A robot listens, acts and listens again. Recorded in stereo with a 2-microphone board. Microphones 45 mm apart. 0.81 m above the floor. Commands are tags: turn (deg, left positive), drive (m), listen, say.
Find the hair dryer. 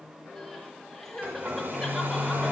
<turn deg="-50"/>
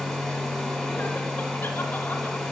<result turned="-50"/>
<say>Facing the hair dryer.</say>